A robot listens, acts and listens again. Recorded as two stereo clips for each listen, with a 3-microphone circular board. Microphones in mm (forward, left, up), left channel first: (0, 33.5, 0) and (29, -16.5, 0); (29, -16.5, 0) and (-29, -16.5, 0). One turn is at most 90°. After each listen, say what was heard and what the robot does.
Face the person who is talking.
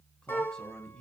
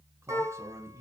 The man speaking: 165° right. Turn 90° right.
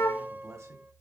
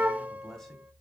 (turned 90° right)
The man speaking is now 80° right. Turn 80° right.
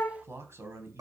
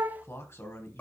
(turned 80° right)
The man speaking is now 30° right. Turn 30° right.
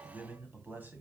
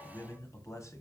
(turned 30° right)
The man speaking is now 10° right. Turn 10° right.
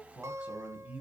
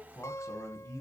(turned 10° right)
Facing the man speaking.